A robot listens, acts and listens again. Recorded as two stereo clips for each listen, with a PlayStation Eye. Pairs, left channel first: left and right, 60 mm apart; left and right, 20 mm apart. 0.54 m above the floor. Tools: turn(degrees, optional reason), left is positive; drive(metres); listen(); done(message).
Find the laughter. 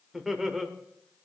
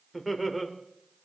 turn(degrees=-30)
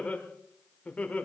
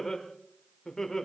turn(degrees=25, reason="So it is at 25° left.")
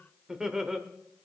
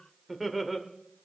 turn(degrees=-10, reason="The laughter is now 10° right.")
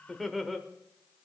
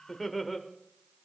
done("Facing the laughter, 1 to 2 m away.")